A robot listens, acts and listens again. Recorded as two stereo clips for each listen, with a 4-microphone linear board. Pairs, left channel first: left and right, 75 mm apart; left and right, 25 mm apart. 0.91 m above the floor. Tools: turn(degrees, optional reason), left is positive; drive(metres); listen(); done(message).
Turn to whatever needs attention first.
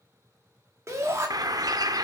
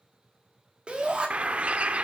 turn(degrees=-40, reason="The shout: about 40° right or 140° right.")
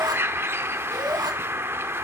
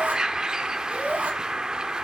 turn(degrees=-100, reason="So it is at 100° right.")
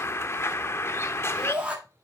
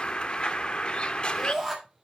turn(degrees=-15, reason="The shout is now 15° right.")
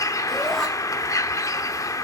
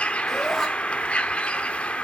listen()
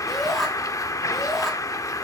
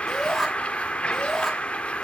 done("Facing the shout, 1 to 2 m away.")